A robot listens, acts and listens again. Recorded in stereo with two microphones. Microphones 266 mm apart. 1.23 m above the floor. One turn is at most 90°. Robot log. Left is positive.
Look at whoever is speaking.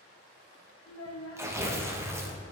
note: The child speaking: about 60° left or 120° left.
cmd yaw +60
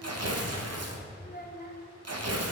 note: So it is at 40° left.
cmd yaw +40
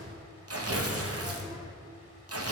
cmd idle
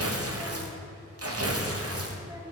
cmd idle
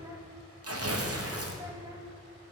end: Facing where the child speaking came from. I can't hear it now.